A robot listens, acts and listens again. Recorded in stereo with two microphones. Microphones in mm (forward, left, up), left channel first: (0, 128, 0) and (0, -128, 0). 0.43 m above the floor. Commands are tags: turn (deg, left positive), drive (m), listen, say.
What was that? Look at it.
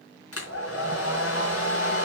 <turn deg="60"/>
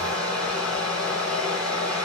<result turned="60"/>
<say>Found it: a hair dryer, straight ahead, 2 to 4 m away.</say>